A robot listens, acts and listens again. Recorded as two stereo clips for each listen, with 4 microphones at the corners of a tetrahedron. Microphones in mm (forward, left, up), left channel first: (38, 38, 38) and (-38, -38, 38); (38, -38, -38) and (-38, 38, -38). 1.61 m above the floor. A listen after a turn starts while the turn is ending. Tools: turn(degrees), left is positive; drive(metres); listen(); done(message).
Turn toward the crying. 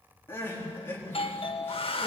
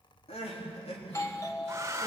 turn(degrees=-25)
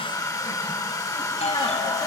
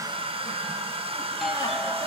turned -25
listen()
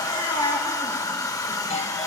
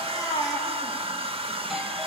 done("Found it: crying, straight ahead, over 4 m away.")